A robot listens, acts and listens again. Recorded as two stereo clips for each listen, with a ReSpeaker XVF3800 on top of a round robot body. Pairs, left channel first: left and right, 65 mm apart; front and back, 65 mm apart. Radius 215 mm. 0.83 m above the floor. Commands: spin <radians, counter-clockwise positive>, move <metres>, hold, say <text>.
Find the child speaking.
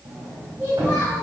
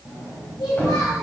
spin -0.52
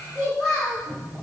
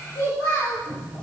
say Facing the child speaking, over 4 m away.